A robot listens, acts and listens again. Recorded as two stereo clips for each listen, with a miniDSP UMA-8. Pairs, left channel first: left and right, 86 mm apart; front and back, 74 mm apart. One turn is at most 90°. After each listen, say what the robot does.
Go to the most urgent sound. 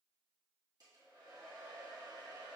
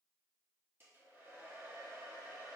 Keep listening.
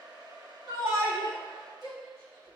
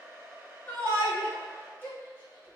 Turn 65° right.
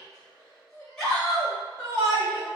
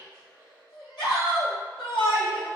Drive 1.0 m forward.
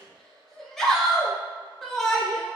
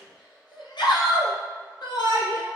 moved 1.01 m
Drive 1.0 m forward.
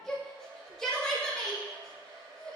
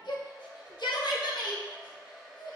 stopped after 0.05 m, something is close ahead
Arrived at the shout, straight ahead.